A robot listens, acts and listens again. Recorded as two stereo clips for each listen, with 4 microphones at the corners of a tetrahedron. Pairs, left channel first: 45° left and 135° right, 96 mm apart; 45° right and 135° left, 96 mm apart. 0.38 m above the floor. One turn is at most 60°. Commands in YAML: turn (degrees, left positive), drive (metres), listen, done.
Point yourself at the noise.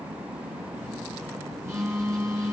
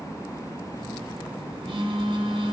turn: 60
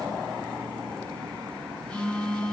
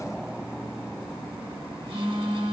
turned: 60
turn: 60
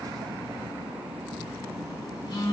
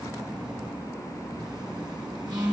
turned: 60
turn: 60
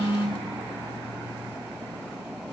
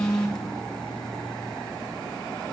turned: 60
turn: 35
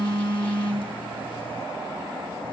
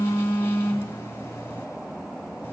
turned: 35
turn: 15
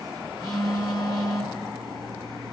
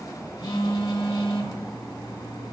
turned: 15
done: "Found it: a phone buzzing, straight ahead, 1 to 2 m away."